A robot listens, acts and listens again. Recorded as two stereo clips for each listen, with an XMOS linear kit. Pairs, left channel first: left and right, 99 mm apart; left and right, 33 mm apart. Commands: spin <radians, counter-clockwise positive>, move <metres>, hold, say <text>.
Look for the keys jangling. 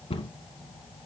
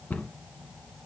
hold
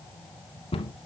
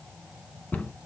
hold
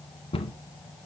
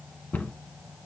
say I can't make out keys jangling, only a cupboard door.